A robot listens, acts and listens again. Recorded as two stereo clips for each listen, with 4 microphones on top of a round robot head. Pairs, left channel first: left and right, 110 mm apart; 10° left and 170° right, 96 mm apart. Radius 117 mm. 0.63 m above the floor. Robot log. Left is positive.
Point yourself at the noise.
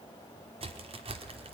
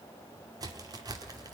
note: The crack: 120° right.
cmd yaw -120
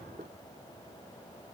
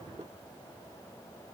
end: Facing where the crack came from. I can't hear it now.